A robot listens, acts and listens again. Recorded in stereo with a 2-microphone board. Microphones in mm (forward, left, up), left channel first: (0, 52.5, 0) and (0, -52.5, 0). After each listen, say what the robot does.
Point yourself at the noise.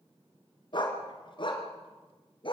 Turn 55° left.
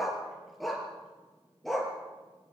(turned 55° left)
Found it: a dog barking, straight ahead, 2 to 4 m away.